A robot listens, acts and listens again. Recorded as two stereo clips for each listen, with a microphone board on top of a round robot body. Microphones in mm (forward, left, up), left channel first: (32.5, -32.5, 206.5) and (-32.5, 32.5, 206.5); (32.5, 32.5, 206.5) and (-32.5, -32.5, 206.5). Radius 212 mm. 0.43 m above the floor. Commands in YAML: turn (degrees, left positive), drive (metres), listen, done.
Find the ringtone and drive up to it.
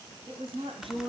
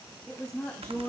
listen: true
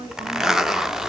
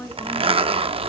listen: true
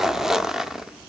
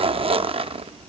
done: "I can't make out a ringtone, only a zipper and a woman speaking."